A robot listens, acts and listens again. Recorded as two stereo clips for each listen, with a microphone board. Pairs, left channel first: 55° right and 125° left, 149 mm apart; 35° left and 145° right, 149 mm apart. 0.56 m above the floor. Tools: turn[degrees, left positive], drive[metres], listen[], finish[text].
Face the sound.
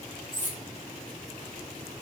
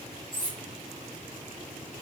Thought: The cutlery clinking: 155° left.
Action: turn[155]
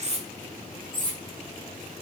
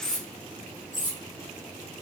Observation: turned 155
Thought: The cutlery clinking is now 65° left.
Action: turn[65]
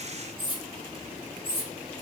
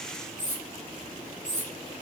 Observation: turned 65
Action: finish[Facing the cutlery clinking.]